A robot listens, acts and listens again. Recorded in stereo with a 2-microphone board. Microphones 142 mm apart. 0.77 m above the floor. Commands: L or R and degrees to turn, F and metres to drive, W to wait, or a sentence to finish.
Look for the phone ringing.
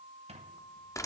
W
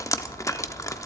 W
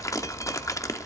I can't make out a phone ringing to turn to.